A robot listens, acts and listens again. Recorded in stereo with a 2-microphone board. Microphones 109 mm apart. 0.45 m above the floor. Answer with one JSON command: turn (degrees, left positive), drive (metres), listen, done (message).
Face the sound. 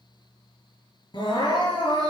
{"turn": 50}
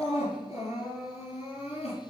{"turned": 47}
{"turn": 85}
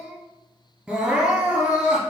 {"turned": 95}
{"turn": -10}
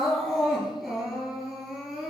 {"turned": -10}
{"done": "Found it: crying, straight ahead."}